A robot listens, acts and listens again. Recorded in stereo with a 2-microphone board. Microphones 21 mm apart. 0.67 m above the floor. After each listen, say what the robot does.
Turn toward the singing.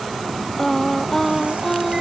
Turn 30° left.
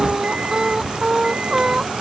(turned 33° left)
Turn 25° right.
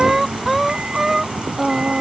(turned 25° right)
Found it: singing, straight ahead.